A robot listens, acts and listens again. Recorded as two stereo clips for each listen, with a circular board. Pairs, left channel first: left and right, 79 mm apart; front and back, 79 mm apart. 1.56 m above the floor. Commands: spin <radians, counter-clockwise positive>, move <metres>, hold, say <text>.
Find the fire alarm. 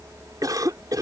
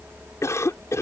hold
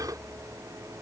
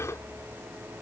hold
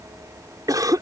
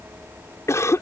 say I can't make out a fire alarm, only a cough.